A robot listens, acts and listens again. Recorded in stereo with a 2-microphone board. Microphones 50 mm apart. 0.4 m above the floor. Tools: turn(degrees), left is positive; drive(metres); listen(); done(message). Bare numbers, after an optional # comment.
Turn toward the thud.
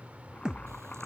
# The thud: about 15° right or 165° right.
turn(-15)
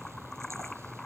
listen()
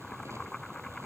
done("I heard a thud, but can't make it out now. It was about straight ahead or 150° right.")